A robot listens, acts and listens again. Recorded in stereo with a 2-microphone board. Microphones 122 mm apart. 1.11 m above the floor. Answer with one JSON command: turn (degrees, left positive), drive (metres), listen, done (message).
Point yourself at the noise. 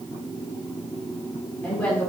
{"turn": 30}
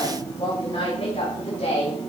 {"turn": 125}
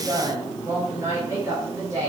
{"turn": -30}
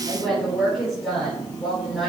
{"done": "Found it: a woman speaking, straight ahead, 2 to 4 m away."}